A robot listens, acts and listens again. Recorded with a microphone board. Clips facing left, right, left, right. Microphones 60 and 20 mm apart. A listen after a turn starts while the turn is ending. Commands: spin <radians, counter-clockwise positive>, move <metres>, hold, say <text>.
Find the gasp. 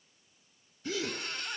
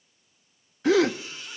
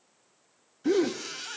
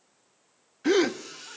spin -1.57
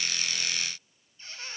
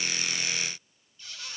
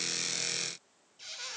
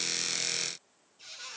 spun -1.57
say Facing where the gasp came from. I can't hear it now.